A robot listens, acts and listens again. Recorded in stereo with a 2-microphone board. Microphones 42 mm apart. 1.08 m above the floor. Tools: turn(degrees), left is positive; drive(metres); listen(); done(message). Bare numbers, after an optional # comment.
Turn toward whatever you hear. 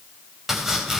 turn(-30)
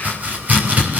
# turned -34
# So it is at 140° right.
turn(-140)
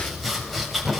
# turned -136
done("Found it: chopping, straight ahead.")